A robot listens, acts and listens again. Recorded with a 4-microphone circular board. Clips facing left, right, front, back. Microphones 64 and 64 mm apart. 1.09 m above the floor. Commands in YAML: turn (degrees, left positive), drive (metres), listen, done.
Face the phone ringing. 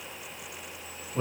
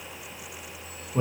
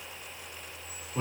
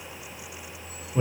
listen: true
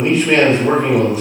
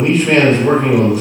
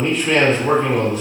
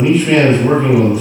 listen: true
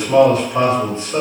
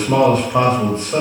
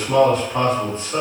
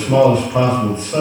done: "I can't make out a phone ringing, only a man speaking."